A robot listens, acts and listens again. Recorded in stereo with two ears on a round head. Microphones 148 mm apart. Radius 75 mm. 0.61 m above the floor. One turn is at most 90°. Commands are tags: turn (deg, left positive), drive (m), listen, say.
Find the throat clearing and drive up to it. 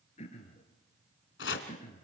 <turn deg="40"/>
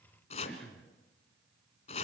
<drive m="1.0"/>
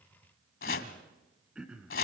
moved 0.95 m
<drive m="1.0"/>
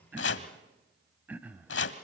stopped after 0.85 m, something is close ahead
<turn deg="-10"/>
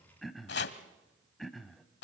<say>I am next to the throat clearing.</say>